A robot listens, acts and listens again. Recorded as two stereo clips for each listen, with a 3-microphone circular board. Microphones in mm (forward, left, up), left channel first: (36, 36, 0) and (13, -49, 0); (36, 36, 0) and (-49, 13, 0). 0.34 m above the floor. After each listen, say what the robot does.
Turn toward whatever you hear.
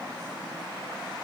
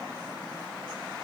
Keep listening.
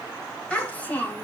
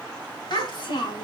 Facing the child speaking.